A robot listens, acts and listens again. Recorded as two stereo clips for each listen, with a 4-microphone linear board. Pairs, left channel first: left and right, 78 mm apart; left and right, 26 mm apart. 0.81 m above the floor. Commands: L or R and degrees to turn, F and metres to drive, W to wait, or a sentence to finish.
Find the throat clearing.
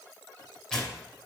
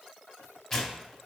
W
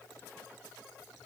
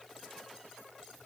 W
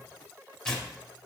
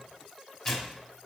I can't make out throat clearing to turn to.